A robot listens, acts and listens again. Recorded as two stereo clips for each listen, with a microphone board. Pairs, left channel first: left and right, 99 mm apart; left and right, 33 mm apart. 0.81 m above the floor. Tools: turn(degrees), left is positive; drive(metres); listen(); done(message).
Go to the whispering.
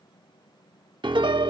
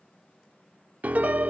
listen()
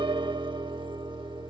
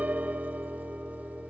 listen()
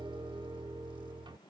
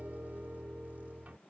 done("I can't make out whispering, only a piano.")